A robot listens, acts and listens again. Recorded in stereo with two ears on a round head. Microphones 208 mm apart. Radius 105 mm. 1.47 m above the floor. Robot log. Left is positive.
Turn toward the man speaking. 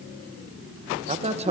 note: The man speaking: about 30° right or 150° right.
cmd yaw -30
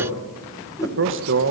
note: So it is at 125° right.
cmd yaw -125
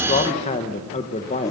note: The man speaking is now 25° left.
cmd yaw +25
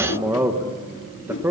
note: The man speaking is now 10° right.
cmd yaw -10
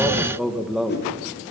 end: Facing the man speaking, 1 to 2 m away.